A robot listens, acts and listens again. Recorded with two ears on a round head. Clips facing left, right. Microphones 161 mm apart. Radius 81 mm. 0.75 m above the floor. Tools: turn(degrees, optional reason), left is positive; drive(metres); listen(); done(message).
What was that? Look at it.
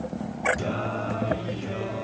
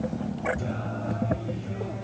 turn(degrees=90)
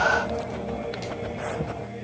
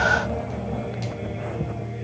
done("Facing the singing.")